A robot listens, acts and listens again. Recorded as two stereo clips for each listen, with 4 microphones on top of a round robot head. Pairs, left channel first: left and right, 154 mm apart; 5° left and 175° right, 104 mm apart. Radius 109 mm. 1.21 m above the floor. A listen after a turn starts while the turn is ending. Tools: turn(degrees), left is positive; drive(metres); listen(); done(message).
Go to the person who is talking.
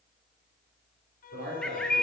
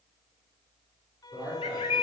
turn(degrees=-85)
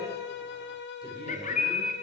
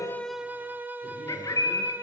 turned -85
listen()
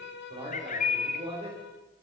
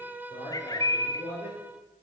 turn(degrees=-35)
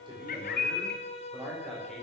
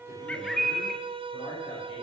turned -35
listen()
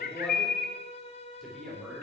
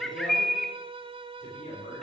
drive(metres=1.0)
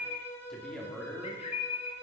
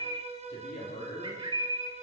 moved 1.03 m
drive(metres=1.0)
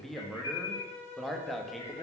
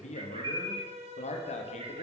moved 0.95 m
drive(metres=1.0)
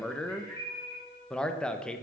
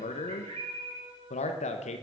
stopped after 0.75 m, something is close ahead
done("Arrived at the man speaking, straight ahead.")